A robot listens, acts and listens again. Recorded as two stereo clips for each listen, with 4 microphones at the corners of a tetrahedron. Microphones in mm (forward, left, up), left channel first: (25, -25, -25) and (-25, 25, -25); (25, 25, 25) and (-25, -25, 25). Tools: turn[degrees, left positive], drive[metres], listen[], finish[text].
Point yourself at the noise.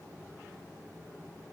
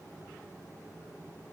Action: listen[]
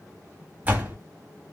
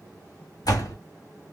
Thought: The door slam: 70° left.
Action: turn[70]
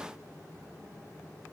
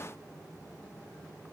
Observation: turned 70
Action: finish[Facing where the door slam came from. I can't hear it now.]